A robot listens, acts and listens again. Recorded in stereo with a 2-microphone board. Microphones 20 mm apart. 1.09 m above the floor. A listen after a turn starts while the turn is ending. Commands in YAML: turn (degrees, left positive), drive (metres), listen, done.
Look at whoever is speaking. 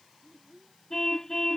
turn: -30
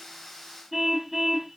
listen: true
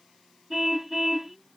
listen: true
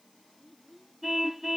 done: "Found it: a child speaking, straight ahead."